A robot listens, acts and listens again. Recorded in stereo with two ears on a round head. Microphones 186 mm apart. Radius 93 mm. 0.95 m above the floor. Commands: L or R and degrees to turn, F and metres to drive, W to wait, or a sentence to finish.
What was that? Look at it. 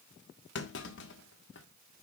L60
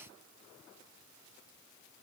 W
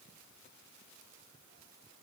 I heard a clunk, but can't make it out now. It was about straight ahead or 60° left.